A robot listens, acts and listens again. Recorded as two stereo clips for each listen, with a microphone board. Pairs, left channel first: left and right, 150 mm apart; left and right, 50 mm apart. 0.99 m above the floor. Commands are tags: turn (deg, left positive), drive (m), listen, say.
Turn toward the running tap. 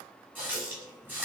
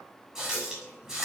<turn deg="-30"/>
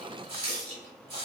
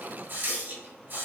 <turn deg="-135"/>
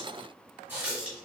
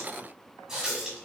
<turn deg="-10"/>
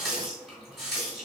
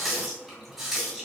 <say>Facing the running tap, 1 to 2 m away.</say>